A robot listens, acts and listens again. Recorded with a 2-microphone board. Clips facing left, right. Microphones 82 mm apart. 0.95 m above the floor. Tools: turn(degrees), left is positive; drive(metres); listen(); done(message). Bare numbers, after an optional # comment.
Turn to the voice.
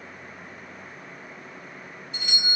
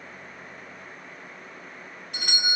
listen()
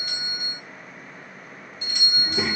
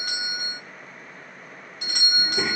turn(-30)
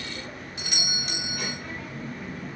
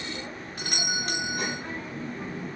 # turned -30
# So it is at 145° right.
turn(-145)
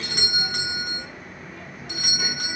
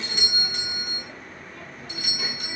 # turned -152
done("Found it: a child speaking, straight ahead.")